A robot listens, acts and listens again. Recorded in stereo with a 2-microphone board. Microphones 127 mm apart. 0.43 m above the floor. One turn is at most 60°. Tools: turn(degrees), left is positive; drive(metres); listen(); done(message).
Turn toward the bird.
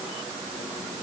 listen()
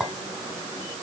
listen()
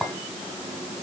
done("I can't make out a bird to turn to.")